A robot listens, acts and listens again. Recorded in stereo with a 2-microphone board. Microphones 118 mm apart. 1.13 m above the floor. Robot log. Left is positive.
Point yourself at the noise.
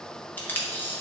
cmd yaw +30
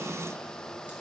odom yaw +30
cmd idle
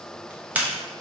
note: So it is at 15° right.
cmd yaw -15
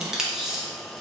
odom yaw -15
end: Found it: tape being pulled, straight ahead, under 1 m away.